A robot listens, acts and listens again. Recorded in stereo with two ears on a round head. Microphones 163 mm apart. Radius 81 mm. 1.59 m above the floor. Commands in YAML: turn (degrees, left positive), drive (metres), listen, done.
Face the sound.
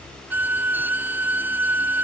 turn: -30
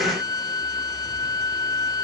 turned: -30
turn: 20
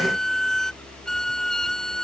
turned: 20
done: "Facing the violin."